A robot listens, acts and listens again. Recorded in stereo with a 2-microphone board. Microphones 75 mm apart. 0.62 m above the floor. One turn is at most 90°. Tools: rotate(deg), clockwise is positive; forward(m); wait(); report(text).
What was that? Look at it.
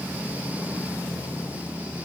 wait()
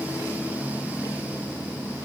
wait()
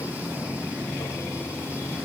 report("I can't make out anything.")